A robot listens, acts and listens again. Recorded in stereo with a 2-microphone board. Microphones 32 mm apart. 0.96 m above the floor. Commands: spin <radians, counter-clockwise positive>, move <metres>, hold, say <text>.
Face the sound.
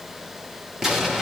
spin -0.52
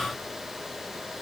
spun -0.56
hold
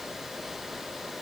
say I heard an explosion, but can't make it out now. It was about 20° left or 135° right.